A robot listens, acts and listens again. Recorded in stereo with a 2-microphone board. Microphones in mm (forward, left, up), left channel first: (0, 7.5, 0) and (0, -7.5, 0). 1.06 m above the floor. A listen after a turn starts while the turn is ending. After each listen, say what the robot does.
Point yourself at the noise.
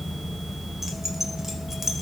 Turn 30° right.
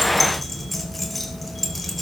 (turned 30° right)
Found it: keys jangling, straight ahead.